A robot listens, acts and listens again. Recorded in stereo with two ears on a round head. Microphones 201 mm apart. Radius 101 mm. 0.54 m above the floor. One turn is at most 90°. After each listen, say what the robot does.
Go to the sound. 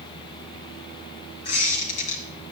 Turn 70° left.
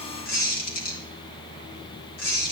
Turn 40° left.
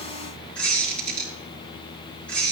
Drive 1.0 m forward.
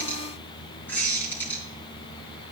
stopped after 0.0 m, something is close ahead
Turn 10° left.
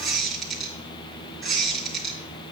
Blocked. The squeak is further on, straight ahead.